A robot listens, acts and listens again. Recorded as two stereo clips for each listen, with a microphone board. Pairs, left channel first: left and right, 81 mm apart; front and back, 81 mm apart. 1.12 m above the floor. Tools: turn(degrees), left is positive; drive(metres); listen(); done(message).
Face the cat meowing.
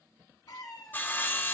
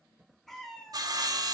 turn(degrees=80)
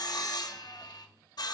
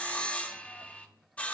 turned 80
listen()
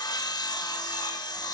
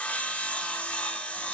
listen()
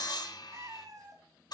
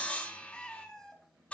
turn(degrees=-80)
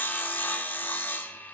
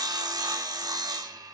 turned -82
listen()
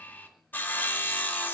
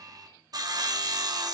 listen()
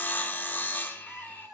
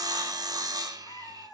turn(degrees=-15)
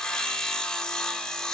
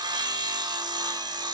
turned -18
listen()
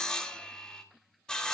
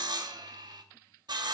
listen()
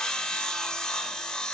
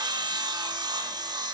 done("I heard a cat meowing from this way, but can't make it out now.")